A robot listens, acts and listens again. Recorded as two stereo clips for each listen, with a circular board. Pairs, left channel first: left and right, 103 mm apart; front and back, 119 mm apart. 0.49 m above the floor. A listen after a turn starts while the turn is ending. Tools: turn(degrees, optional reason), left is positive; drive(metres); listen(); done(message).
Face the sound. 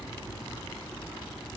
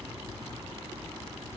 listen()
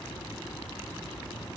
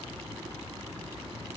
listen()
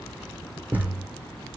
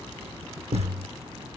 turn(degrees=-160, reason="The thud: 160° right.")
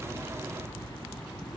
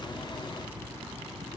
done("I heard a thud from this way, but can't make it out now.")